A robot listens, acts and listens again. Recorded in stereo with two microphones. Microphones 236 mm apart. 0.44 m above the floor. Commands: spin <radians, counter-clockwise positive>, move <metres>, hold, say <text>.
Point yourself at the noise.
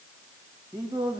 spin -0.35
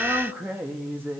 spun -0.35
spin -0.52
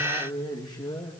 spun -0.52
spin 0.26
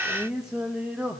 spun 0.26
say Found it: singing, straight ahead.